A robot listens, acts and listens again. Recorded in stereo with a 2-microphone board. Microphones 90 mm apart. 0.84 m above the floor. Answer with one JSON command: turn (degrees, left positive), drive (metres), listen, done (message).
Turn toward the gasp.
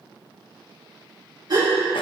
{"turn": -50}
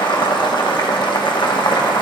{"listen": true}
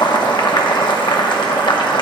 {"done": "I heard a gasp, but can't make it out now. It was about straight ahead or 80° right."}